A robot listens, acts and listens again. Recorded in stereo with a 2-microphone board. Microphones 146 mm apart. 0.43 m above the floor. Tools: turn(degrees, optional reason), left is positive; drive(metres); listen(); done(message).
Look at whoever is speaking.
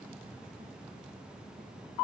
listen()
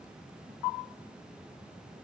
listen()
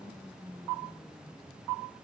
done("I can't make out anyone speaking.")